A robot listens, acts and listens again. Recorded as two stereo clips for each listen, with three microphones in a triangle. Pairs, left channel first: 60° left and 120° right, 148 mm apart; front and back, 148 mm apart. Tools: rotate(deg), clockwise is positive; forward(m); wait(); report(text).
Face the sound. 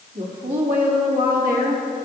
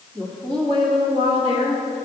rotate(130)
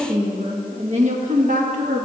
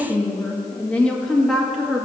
rotate(95)
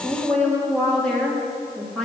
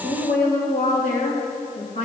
rotate(25)
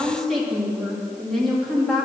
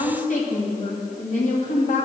rotate(30)
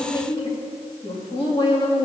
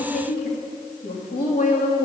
report("Found it: a woman speaking, straight ahead, 1 to 2 m away.")